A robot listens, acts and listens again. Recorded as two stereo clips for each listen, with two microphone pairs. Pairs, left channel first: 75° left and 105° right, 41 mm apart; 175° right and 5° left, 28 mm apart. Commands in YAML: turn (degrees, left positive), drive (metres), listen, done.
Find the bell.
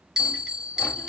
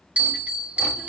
turn: -30
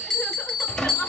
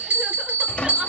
done: "Facing the bell, 1 to 2 m away."